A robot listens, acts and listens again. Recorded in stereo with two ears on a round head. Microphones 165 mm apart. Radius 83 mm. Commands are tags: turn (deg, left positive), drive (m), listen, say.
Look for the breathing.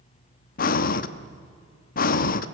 <turn deg="50"/>
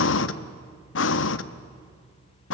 <turn deg="80"/>
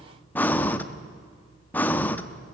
<turn deg="10"/>
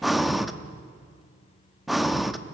<say>Facing the breathing.</say>